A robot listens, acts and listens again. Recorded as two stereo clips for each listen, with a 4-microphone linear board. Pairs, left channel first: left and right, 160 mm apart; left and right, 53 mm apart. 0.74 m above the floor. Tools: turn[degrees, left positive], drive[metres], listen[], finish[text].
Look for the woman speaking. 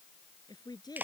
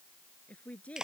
Thought: The woman speaking: about 25° left or 155° left.
Action: turn[25]
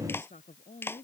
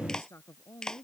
Thought: So it is at 125° left.
Action: turn[125]
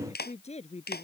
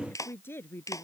Thought: The woman speaking is now 40° left.
Action: turn[40]
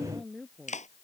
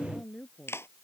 Action: finish[Found it: a woman speaking, straight ahead.]